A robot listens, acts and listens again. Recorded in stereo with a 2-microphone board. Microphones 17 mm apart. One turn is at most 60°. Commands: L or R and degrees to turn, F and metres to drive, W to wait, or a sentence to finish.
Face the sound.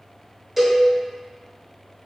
R30
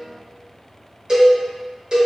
R60
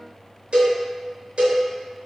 R60
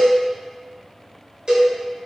R50
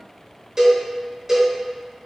R25
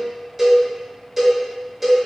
R10
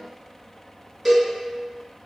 Facing the cowbell, 1 to 2 m away.